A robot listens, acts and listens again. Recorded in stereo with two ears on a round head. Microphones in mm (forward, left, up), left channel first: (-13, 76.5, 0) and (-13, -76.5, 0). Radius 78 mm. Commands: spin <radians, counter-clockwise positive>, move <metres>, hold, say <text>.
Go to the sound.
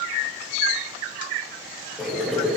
spin 0.52
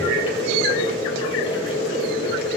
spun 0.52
spin 2.53
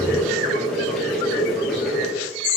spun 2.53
move 1.0
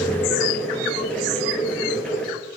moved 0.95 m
spin 0.17
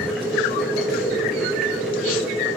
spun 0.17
move 1.0
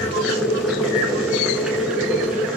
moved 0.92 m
move 1.0
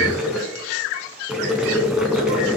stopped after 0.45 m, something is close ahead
say Arrived at the boiling, straight ahead.